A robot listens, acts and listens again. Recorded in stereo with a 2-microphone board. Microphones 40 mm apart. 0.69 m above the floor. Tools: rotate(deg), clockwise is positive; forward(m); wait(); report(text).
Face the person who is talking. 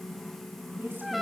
rotate(55)
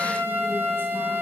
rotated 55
wait()
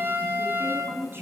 rotate(65)
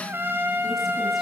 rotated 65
wait()
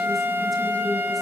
wait()
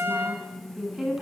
report("Found it: a woman speaking, straight ahead, over 4 m away.")